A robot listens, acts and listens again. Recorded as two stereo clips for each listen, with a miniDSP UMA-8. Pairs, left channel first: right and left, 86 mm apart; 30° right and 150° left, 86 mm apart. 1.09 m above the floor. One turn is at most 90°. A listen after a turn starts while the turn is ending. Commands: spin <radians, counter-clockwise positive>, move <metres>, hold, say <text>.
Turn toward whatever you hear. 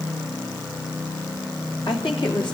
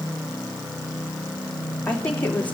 spin -1.57
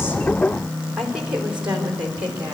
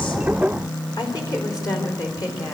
spin 0.26
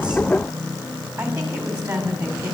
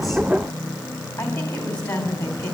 spin 0.26
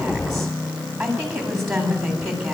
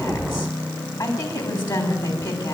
say Found it: a woman speaking, straight ahead, 2 to 4 m away.